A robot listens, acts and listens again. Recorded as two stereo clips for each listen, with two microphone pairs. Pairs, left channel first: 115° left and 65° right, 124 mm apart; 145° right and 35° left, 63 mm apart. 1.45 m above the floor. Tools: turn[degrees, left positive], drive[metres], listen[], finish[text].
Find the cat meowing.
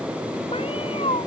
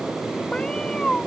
Thought: The cat meowing: 135° left.
Action: turn[135]
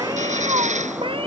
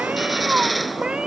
Thought: The cat meowing is now 35° right.
Action: turn[-35]
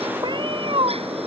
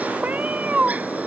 Thought: The cat meowing is now 30° right.
Action: turn[-30]
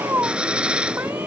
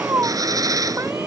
Action: finish[Found it: a cat meowing, straight ahead.]